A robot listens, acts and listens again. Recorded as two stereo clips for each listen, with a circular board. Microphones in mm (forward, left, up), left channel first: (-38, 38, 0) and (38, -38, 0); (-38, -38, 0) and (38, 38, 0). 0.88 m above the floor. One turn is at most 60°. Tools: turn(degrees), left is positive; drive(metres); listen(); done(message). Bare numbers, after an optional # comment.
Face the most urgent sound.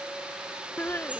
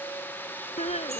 # The crying: 155° right.
turn(-60)
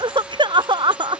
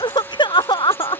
# The crying is now 90° right.
turn(-60)
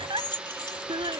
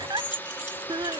done("Found it: crying, straight ahead.")